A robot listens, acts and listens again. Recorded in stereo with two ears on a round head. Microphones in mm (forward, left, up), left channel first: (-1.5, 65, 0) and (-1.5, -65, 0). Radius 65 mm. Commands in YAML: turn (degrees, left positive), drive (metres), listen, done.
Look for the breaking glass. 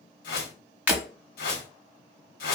turn: -30
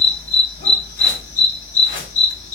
listen: true
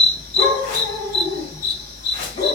done: "I heard breaking glass, but can't make it out now. It was about 15° left or 135° right."